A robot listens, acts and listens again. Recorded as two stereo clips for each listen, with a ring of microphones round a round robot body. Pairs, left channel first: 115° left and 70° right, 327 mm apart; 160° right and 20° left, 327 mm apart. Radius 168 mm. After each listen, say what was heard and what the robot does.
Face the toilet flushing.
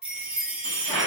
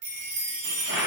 The toilet flushing: 30° right. Turn 30° right.
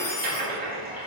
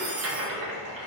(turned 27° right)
Found it: a toilet flushing, straight ahead, 1 to 2 m away.